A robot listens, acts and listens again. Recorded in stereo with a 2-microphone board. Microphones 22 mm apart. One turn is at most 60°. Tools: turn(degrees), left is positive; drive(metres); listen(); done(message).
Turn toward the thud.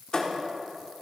turn(degrees=40)
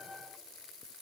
listen()
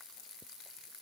done("I heard a thud, but can't make it out now. It was about straight ahead or 100° left.")